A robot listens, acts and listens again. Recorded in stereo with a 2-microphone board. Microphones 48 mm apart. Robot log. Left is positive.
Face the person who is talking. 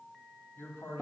note: The man speaking: about 55° left or 125° left.
cmd yaw +55
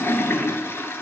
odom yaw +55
cmd idle
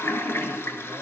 cmd idle
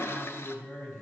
note: So it is at 55° left.
cmd yaw +55
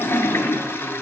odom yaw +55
cmd idle
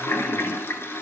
cmd idle
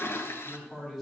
end: Facing the man speaking.